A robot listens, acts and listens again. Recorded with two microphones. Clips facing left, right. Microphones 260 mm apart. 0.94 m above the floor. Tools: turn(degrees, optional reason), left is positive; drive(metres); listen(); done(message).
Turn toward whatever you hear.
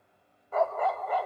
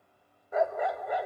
turn(degrees=-15, reason="The dog barking: about 15° right or 165° right.")
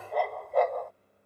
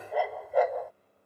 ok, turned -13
done("Facing the dog barking.")